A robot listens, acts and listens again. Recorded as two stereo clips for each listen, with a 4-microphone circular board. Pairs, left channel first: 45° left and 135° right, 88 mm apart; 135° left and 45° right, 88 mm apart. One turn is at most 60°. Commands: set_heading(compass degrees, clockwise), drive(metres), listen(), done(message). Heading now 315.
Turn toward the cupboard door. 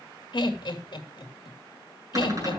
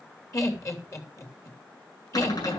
set_heading(255)
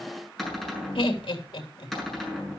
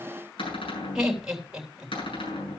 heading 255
set_heading(195)
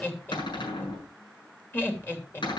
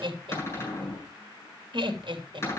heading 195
set_heading(135)
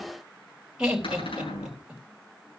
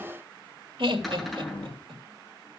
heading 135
set_heading(90)
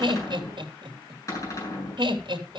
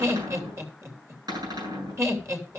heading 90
done("Facing the cupboard door, over 4 m away.")